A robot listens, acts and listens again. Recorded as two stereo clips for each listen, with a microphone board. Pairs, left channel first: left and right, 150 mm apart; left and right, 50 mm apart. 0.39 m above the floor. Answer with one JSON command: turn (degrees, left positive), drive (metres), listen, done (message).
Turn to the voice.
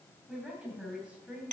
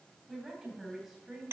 {"turn": -30}
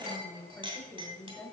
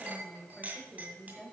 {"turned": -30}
{"turn": 15}
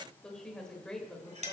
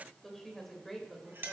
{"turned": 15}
{"done": "Facing the woman speaking."}